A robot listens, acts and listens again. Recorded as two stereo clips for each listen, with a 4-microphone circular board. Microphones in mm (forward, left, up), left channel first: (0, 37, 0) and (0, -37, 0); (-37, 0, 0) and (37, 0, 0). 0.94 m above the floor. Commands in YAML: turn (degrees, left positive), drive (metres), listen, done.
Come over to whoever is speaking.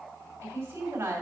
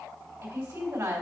turn: -30
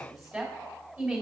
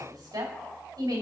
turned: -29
drive: 1.0
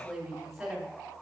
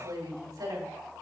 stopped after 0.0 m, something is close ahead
done: "Something is in my way. I am facing the woman speaking but have not reached it."